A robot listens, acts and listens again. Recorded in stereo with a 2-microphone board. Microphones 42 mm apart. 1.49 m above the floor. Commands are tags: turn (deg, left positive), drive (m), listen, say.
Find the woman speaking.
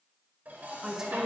<turn deg="-30"/>
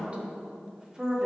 <turn deg="-30"/>
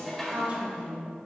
<turn deg="-25"/>
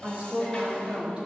<turn deg="-150"/>
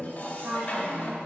<turn deg="-55"/>
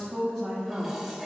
<say>Found it: a woman speaking, straight ahead.</say>